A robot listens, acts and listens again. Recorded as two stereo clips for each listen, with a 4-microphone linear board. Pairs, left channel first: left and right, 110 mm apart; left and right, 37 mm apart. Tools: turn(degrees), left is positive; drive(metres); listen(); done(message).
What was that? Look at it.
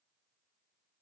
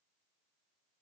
listen()
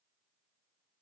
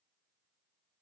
listen()
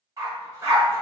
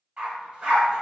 turn(degrees=-30)
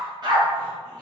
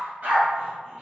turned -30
turn(degrees=-135)
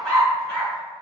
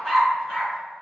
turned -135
done("Facing the dog barking.")